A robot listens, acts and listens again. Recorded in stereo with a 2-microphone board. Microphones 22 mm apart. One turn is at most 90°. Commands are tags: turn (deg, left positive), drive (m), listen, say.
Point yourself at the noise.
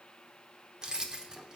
<turn deg="-35"/>
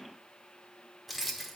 <say>Found it: keys jangling, straight ahead, under 1 m away.</say>